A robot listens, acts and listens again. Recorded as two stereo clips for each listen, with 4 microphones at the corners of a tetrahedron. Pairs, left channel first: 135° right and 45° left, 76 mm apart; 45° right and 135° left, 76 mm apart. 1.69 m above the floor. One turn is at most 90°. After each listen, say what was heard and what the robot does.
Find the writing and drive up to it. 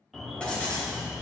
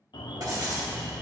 The writing: 150° left. Turn 90° left.
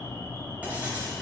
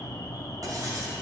The writing is now 110° left. Turn 90° left.
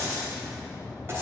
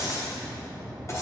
Drive 1.0 m forward.
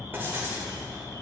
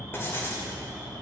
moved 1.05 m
Drive 1.0 m forward.
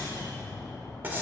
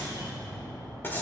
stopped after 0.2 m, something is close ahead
Arrived at the writing, straight ahead.